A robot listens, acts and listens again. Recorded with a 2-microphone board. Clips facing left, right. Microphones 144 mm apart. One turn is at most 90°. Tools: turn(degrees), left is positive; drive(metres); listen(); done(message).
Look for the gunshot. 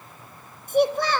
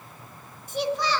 listen()
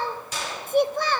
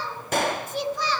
turn(degrees=-60)
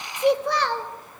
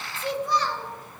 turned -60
listen()
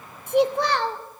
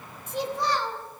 done("I heard a gunshot, but can't make it out now. It was about straight ahead or 60° right.")